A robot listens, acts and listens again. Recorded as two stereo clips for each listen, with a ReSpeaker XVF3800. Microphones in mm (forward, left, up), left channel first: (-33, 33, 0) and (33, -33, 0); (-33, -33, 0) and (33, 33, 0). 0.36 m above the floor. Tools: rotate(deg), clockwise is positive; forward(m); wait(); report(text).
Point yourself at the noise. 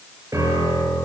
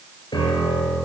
rotate(100)
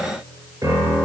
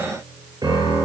report("Facing the piano, over 4 m away.")